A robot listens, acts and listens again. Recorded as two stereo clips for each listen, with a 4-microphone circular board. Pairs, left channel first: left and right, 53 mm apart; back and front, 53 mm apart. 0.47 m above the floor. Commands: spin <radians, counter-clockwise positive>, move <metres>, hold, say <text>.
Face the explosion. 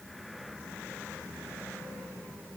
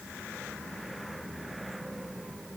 hold
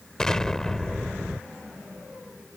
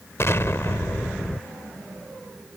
spin 2.88
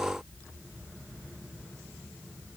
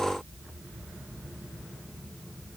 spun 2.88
say Facing where the explosion came from. I can't hear it now.